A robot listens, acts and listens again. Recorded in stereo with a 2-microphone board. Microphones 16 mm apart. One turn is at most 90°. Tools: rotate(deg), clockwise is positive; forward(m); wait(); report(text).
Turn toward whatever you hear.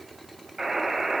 rotate(60)
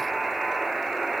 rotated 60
rotate(60)
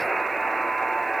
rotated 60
report("Facing the buzzer.")